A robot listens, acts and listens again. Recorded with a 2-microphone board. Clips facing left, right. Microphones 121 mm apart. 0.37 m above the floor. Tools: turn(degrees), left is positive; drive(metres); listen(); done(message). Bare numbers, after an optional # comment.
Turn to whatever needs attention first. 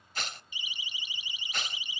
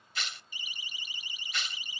# The siren: about 45° right or 135° right.
turn(-45)
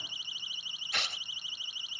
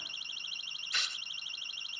# So it is at 85° right.
turn(-85)
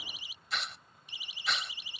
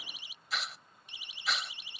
done("Facing the siren.")